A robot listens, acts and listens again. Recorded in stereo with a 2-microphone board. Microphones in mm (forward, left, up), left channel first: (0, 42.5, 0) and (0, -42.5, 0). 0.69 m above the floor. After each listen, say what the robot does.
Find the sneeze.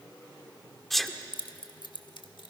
Turn 30° left.
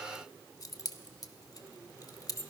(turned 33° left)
Keep listening.
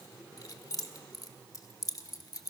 I heard a sneeze, but can't make it out now. It was about 30° right or 145° left.